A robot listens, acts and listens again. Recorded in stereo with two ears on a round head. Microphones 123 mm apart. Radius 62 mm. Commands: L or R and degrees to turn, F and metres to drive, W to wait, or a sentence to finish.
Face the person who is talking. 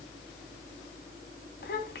L75
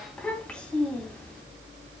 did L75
L10
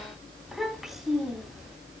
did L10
Facing the child speaking, 2 to 4 m away.